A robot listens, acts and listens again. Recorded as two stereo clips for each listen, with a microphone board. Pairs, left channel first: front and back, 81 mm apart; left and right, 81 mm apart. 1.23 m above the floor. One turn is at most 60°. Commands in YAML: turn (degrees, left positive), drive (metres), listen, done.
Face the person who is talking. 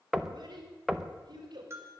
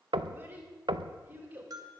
turn: -60
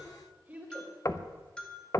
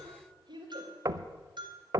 turn: -60
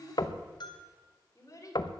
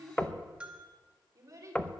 turn: -50
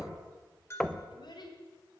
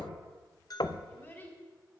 turn: 20
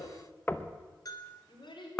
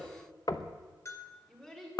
done: "Facing the child speaking, 2 to 4 m away."